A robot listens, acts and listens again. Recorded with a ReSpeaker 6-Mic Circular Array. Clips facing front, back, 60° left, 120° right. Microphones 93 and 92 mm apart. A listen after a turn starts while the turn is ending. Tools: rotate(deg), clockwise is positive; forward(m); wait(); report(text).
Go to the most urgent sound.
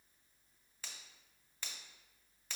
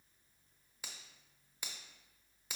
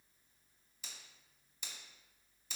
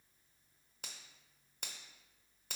wait()
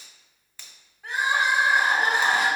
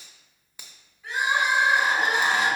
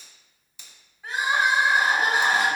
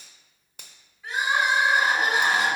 rotate(-10)
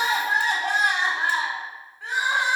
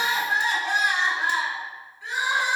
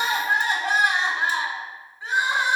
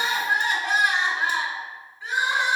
forward(1.0)
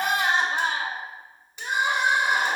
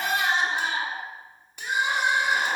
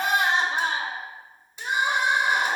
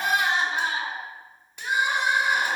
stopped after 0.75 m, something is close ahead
report("I am next to the crying.")